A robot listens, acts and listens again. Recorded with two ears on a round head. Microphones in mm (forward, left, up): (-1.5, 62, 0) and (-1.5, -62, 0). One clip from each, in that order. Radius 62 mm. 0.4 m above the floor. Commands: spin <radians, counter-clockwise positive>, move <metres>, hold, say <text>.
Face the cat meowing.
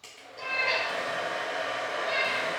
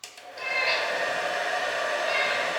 spin -1.05
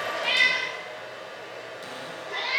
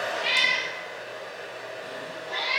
spin -0.70
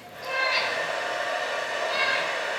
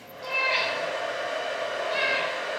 spin 0.26
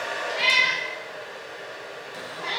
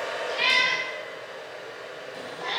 say Found it: a cat meowing, straight ahead, over 4 m away.